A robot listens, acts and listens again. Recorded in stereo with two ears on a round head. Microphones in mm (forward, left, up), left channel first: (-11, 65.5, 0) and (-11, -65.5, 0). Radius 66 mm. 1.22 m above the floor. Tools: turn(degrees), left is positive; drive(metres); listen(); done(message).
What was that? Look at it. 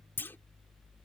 turn(degrees=15)
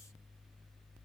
listen()
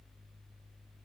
done("I heard a clunk, but can't make it out now. It was about straight ahead or 150° left.")